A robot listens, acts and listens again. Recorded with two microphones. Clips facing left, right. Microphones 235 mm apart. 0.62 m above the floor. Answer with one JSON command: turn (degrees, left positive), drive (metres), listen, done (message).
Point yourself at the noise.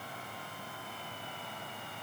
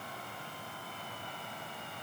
{"listen": true}
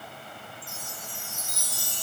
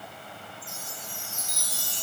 {"turn": 55}
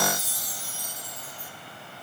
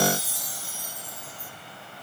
{"turn": 50}
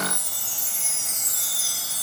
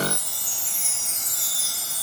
{"done": "Found it: a chime, straight ahead."}